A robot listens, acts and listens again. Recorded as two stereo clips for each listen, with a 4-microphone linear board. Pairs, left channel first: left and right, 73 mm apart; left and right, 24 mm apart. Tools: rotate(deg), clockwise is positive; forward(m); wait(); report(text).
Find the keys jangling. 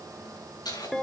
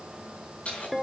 rotate(-65)
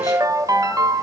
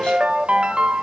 wait()
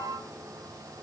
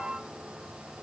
wait()
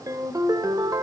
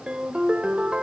report("I heard keys jangling, but can't make it out now. It was about straight ahead or 50° left.")